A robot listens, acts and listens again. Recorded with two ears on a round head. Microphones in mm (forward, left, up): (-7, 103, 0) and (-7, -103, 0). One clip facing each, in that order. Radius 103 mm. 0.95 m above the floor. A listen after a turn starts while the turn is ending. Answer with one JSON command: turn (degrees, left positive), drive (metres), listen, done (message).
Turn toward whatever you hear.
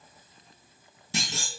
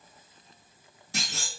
{"turn": 60}
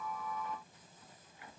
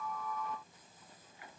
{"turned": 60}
{"listen": true}
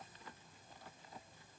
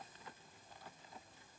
{"done": "I heard a clunk, but can't make it out now. It was about straight ahead or 60° left."}